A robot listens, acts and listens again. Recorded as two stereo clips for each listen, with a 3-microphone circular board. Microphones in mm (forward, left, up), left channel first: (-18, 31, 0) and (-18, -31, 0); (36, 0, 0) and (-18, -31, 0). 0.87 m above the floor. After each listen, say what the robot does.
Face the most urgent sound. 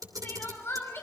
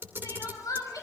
Turn 40° left.
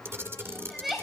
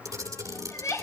Facing the crying, over 4 m away.